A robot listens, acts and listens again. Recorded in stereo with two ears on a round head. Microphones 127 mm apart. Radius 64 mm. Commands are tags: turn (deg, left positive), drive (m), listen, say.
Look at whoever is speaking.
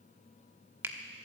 <listen/>
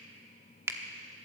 <listen/>
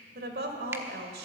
<turn deg="-75"/>
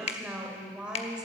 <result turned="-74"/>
<say>Facing the woman speaking.</say>